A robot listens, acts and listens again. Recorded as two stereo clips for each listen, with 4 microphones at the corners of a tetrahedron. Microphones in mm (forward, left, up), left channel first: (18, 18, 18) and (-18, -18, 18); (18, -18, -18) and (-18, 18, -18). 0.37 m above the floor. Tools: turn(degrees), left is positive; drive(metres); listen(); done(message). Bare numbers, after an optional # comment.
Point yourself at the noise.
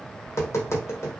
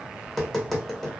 # The tapping: 40° left.
turn(40)
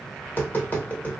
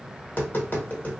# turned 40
done("Facing the tapping.")